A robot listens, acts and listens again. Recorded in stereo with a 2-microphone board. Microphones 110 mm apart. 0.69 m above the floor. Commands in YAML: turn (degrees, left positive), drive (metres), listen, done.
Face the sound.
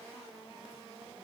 listen: true
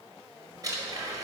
turn: -35
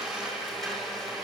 done: "Found it: a blender, straight ahead, over 4 m away."